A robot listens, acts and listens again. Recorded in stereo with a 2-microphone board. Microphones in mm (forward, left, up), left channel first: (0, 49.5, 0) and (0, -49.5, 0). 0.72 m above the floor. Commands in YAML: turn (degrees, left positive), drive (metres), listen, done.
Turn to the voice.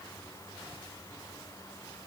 listen: true
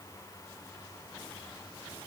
listen: true
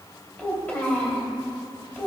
turn: 15
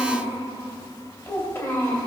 turn: 150
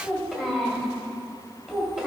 done: "Found it: a child speaking, straight ahead, 2 to 4 m away."